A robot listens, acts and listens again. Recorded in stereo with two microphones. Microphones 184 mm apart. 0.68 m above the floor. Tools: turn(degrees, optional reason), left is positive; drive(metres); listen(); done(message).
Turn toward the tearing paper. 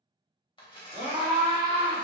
turn(degrees=30, reason="The tearing paper: about 30° left or 150° left.")
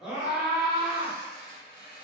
turn(degrees=120, reason="So it is at 120° left.")
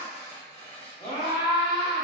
turn(degrees=35, reason="The tearing paper is now 35° left.")
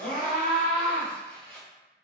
done("Found it: tearing paper, straight ahead.")